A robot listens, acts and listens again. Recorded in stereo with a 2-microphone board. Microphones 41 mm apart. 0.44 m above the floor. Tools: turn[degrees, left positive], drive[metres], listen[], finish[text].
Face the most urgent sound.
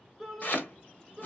Action: turn[30]
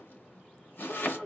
Thought: So it is at 140° left.
Action: turn[140]
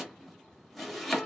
Thought: The shout is now 45° left.
Action: turn[45]
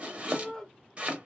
Thought: The shout is now 10° left.
Action: turn[10]
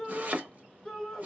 Action: finish[Found it: a shout, straight ahead.]